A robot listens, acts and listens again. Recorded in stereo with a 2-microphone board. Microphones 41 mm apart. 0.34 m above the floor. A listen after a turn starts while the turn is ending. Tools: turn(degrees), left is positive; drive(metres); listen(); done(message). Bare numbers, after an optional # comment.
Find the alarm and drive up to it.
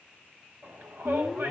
turn(-30)
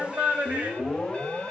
# So it is at 15° left.
turn(15)
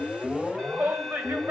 drive(1.0)
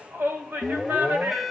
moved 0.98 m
drive(1.0)
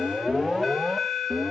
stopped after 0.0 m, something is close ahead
done("I am next to the alarm.")